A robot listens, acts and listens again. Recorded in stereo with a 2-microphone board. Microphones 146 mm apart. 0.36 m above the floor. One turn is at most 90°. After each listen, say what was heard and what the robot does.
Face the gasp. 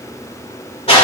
Keep listening.
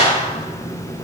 Keep listening.
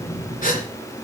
The gasp: about 75° left or 105° left. Turn 75° left.
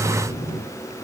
Keep listening.
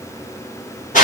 I heard a gasp, but can't make it out now. It was about straight ahead or 30° left.